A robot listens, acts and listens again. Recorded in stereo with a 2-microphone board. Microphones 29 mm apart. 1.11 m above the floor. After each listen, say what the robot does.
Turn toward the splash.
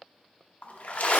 Turn 55° left.
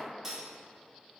Keep listening.
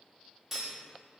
I heard a splash, but can't make it out now. It was about straight ahead or 70° left.